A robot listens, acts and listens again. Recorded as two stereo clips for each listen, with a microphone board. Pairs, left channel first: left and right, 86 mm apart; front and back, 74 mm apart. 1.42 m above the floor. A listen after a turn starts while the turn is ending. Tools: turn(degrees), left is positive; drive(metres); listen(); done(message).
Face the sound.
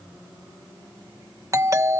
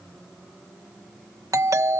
turn(degrees=-140)
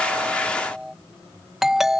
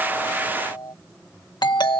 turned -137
done("Found it: a doorbell, straight ahead.")